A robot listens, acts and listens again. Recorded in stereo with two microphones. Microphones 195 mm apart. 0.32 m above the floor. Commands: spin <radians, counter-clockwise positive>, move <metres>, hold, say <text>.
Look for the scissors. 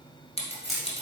spin 0.52
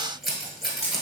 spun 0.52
say Found it: scissors, straight ahead.